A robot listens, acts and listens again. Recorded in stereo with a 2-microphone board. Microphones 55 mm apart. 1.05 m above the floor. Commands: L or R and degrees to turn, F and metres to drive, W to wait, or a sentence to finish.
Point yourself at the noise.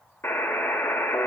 L50
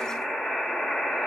L15
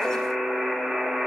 Facing the buzzer, 1 to 2 m away.